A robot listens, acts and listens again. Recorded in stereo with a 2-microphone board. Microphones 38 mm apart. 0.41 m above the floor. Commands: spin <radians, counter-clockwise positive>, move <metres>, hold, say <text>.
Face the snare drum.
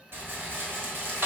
hold
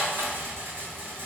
hold
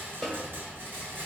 spin 0.52
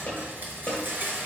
spin 2.53
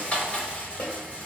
spin 0.79
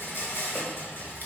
hold
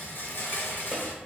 hold
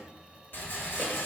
say I heard a snare drum from this way, but can't make it out now.